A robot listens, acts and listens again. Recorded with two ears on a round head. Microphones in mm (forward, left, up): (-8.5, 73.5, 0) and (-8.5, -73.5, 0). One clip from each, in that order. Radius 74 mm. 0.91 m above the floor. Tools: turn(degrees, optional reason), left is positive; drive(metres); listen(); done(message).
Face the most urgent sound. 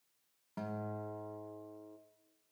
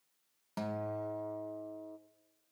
listen()
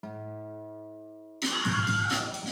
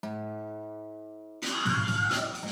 turn(degrees=90)
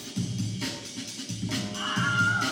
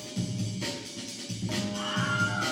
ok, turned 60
turn(degrees=25, reason="So it is at 25° left.")
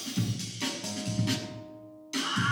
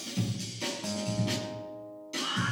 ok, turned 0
turn(degrees=25, reason="The scream is now 25° left.")
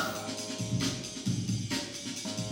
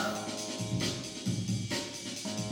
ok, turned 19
done("Facing the scream, over 4 m away.")